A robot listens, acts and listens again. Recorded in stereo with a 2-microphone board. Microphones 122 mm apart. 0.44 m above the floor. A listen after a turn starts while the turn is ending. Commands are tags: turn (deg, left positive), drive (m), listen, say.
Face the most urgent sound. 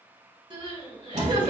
<turn deg="-45"/>
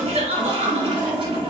<turn deg="-85"/>
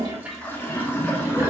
<listen/>
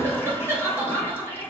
<turn deg="-20"/>
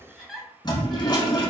<say>Facing the crying.</say>